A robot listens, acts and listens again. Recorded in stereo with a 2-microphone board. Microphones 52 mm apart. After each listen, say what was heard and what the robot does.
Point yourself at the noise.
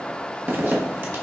The zipper: about 45° right or 135° right. Turn 45° right.
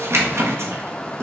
So it is at 80° right. Turn 80° right.
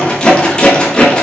The zipper is now 20° left. Turn 20° left.
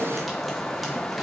Keep listening.
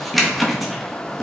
Facing the zipper, under 1 m away.